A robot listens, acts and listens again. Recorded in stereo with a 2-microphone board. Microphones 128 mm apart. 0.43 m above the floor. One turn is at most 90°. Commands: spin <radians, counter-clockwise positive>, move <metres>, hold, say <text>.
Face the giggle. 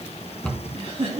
spin -0.87
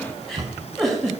say Found it: a giggle, straight ahead, 2 to 4 m away.